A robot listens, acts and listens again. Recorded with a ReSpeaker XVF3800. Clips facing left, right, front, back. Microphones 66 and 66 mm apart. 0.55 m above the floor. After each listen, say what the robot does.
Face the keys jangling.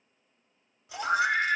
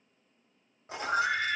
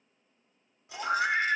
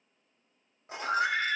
Turn 130° right.
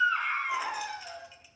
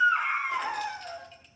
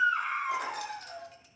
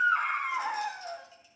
Keep listening.
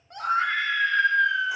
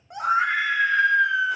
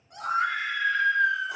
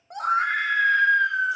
Keep listening.
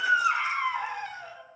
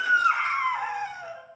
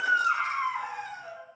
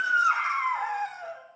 Facing where the keys jangling came from. I can't hear it now.